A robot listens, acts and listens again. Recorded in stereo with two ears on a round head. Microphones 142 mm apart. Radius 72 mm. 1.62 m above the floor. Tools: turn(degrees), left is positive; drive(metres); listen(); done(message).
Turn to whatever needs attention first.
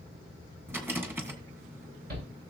turn(degrees=-70)
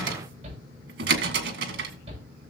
turn(degrees=-40)
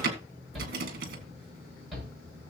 done("Facing the shout.")